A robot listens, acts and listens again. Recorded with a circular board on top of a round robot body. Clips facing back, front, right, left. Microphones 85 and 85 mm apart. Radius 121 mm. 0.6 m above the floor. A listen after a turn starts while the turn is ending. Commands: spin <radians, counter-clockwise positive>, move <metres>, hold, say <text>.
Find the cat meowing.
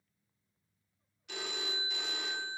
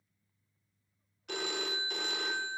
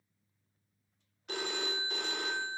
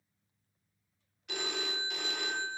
hold
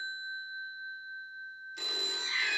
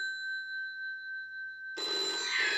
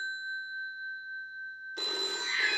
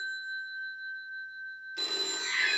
say Found it: a cat meowing, straight ahead, over 4 m away.